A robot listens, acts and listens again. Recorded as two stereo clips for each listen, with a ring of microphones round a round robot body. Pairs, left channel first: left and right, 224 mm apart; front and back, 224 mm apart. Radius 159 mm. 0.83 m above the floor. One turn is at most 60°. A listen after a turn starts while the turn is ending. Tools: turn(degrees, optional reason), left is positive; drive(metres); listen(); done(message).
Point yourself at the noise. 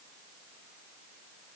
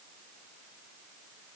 listen()
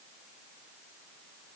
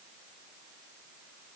listen()
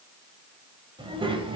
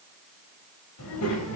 turn(degrees=-20, reason="The child speaking: 20° right.")
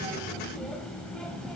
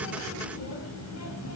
done("Facing the child speaking.")